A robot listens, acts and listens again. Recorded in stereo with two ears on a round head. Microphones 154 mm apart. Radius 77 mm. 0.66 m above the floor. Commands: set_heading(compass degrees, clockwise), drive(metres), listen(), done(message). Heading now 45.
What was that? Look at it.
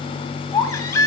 set_heading(25)
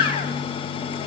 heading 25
set_heading(245)
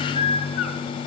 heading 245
set_heading(210)
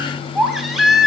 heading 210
done("Facing the baby crying.")